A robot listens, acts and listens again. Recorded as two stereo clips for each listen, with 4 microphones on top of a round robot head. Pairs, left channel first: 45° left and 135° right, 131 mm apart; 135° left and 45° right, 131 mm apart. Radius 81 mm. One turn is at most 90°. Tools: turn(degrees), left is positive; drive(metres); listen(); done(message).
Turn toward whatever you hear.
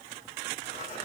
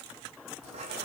done("Facing the writing.")